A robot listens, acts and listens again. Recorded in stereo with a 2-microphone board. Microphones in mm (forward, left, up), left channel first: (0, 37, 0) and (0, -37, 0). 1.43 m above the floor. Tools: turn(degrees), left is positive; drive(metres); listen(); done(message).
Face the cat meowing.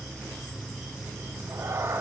turn(degrees=-35)
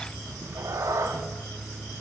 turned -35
turn(degrees=-40)
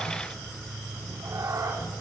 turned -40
turn(degrees=-130)
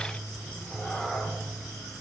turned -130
done("Found it: a cat meowing, straight ahead, 2 to 4 m away.")